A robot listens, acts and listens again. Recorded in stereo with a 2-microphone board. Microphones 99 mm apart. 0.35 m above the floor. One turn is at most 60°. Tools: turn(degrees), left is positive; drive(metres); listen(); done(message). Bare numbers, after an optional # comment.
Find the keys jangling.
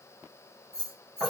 turn(30)
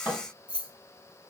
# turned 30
# So it is at 130° left.
turn(60)
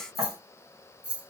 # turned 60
# The keys jangling is now 15° right.
turn(-15)
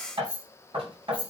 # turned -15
# The keys jangling is now 20° right.
turn(-20)
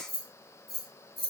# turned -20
done("Facing the keys jangling, 1 to 2 m away.")